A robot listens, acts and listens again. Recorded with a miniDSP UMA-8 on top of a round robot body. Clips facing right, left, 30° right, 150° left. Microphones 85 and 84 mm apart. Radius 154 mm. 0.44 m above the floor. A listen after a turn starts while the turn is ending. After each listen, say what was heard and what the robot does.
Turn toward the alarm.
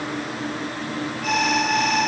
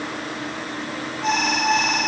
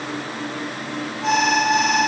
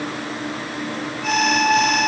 The alarm: 30° left. Turn 30° left.
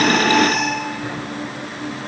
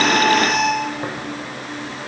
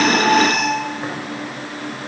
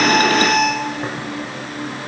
Facing the alarm.